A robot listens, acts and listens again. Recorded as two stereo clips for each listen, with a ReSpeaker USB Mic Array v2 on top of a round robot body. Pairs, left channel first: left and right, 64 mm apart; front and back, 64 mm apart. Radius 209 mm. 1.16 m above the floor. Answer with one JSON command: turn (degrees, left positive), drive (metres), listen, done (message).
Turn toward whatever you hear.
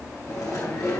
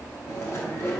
{"turn": 50}
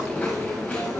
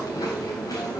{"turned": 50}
{"turn": 20}
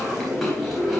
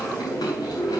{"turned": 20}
{"done": "Found it: chewing, straight ahead."}